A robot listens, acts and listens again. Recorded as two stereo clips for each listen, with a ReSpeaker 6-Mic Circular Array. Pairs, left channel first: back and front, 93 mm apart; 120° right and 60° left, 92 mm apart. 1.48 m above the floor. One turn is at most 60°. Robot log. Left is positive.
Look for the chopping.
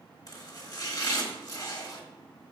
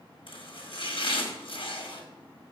note: The chopping: 130° right.
cmd yaw -60
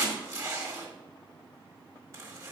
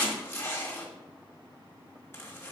note: The chopping is now 55° right.
cmd yaw -55
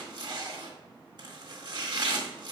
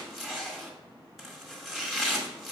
note: The chopping is now 30° right.
cmd yaw -30
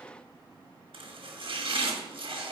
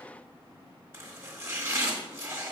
end: Facing the chopping, 1 to 2 m away.